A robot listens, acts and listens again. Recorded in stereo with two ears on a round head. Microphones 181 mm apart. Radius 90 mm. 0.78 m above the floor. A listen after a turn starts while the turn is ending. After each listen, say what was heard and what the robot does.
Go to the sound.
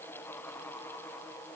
Keep listening.
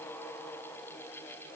Keep listening.
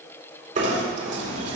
The knocking: about 40° right or 140° right. Turn 40° right.
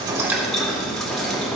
Drive 1.0 m forward.
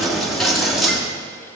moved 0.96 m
Drive 1.0 m forward.
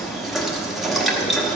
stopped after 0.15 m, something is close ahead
Arrived at the knocking, straight ahead.